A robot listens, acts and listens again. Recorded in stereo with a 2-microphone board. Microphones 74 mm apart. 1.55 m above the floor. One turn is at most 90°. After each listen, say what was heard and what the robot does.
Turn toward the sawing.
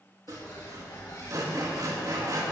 The sawing: about 55° right or 125° right. Turn 55° right.
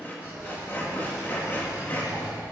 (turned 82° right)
So it is at 25° left. Turn 25° left.
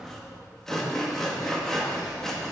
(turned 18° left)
Found it: sawing, straight ahead.